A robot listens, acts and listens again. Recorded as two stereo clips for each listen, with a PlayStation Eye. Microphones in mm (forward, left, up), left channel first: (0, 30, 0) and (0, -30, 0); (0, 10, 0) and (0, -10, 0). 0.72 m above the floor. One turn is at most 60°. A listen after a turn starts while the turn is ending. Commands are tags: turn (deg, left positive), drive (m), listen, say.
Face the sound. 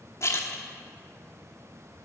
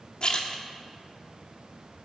<turn deg="50"/>
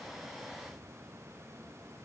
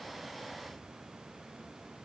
<listen/>
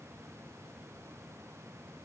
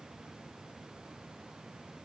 <say>I heard a splash, but can't make it out now. It was about straight ahead or 80° left.</say>